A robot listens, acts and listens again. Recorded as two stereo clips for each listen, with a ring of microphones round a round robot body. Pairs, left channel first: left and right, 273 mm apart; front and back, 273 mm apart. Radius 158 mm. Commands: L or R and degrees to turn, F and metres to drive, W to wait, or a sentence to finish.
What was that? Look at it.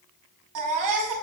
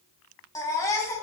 R80
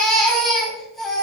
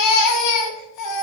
Facing the baby crying.